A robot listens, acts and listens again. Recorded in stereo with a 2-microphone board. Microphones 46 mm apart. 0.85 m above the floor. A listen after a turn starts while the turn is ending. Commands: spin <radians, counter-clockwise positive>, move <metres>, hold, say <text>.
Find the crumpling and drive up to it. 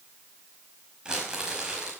spin -0.35
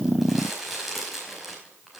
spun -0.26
move 1.0
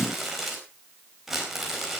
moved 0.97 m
move 1.0
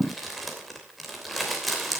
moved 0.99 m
move 1.0
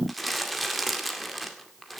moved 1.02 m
move 1.0
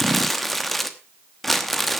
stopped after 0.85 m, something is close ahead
say Arrived at the crumpling, straight ahead.